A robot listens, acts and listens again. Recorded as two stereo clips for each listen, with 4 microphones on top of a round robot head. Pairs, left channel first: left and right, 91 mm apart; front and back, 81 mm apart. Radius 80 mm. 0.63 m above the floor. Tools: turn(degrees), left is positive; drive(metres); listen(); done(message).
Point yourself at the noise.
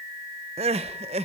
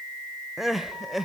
turn(degrees=-90)
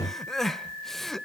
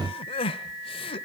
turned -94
done("Found it: crying, straight ahead.")